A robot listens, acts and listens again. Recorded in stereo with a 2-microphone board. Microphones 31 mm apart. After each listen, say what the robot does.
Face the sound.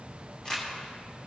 Turn 20° left.
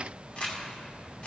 Turn 135° left.
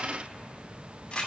Turn 35° left.
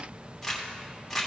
Turn 10° left.
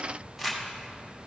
Found it: crumpling, straight ahead.